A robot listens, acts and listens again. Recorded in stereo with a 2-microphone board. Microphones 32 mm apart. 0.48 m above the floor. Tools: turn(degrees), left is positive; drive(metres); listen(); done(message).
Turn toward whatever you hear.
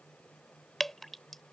turn(degrees=30)
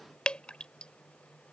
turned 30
turn(degrees=140)
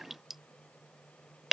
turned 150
turn(degrees=-10)
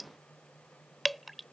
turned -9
done("Found it: dripping, straight ahead.")